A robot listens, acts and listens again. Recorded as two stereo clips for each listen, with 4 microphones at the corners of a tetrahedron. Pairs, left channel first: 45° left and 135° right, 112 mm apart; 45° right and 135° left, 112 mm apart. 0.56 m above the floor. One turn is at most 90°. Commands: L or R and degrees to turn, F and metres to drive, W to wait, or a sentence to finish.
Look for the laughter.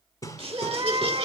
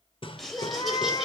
R90
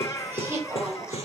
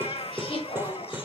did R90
R75
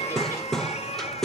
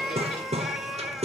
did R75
W
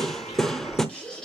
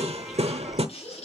R35
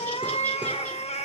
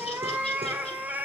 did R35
W
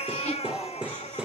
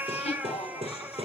R30
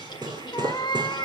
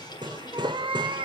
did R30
Facing the laughter.